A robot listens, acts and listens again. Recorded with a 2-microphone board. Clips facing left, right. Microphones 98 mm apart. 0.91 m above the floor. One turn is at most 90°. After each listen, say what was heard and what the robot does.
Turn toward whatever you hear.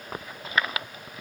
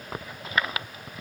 Keep listening.
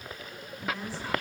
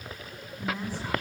Turn 30° right.
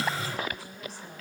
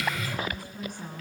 So it is at 130° right. Turn 90° right.
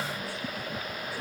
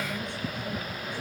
Nothing new. It was at 40° right. Turn 40° right.
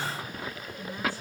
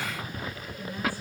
The woman speaking is now 20° left. Turn 20° left.
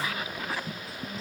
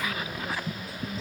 Found it: a woman speaking, straight ahead.